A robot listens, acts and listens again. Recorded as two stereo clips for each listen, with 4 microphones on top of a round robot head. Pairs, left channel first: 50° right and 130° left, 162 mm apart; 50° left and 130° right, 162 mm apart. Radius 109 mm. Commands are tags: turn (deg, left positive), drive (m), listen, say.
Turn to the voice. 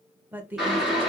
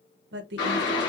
<turn deg="-150"/>
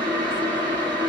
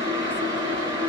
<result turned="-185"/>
<turn deg="35"/>
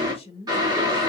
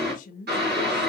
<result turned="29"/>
<say>Facing the woman speaking.</say>